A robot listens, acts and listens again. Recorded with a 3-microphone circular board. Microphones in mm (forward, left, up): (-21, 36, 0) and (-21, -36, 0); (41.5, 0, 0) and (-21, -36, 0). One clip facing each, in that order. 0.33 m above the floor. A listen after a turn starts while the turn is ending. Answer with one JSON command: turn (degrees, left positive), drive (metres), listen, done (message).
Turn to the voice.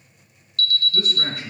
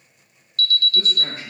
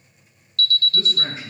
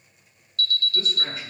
{"turn": 85}
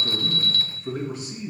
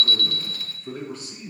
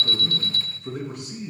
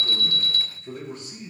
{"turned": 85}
{"turn": 20}
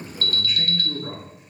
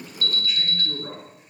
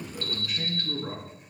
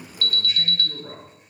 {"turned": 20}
{"done": "Found it: a man speaking, straight ahead, over 4 m away."}